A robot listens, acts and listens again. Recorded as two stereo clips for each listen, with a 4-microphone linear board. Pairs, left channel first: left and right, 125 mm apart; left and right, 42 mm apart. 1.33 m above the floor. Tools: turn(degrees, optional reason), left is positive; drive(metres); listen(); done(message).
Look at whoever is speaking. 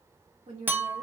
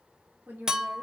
turn(degrees=-60, reason="The woman speaking: about 60° right or 120° right.")
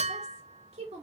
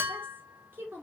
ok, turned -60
turn(degrees=-55, reason="So it is at 55° right.")
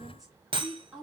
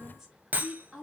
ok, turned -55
done("Found it: a woman speaking, straight ahead, 2 to 4 m away.")